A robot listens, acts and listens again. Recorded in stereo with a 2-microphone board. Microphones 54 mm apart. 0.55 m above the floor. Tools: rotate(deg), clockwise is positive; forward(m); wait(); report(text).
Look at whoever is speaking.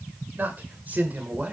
rotate(25)
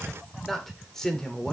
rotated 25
rotate(-15)
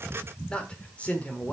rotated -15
rotate(-30)
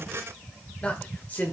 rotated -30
rotate(-30)
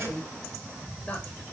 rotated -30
rotate(-25)
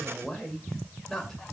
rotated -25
report("Found it: a man speaking, straight ahead, 2 to 4 m away.")